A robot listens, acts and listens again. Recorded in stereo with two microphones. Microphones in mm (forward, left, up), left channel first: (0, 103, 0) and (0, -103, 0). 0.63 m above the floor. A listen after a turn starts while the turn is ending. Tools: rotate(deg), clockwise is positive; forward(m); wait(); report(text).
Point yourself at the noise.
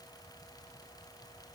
wait()
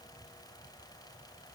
wait()
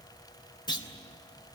rotate(-20)
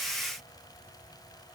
wait()
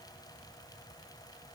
report("I heard a clunk, but can't make it out now. It was about straight ahead or 140° left.")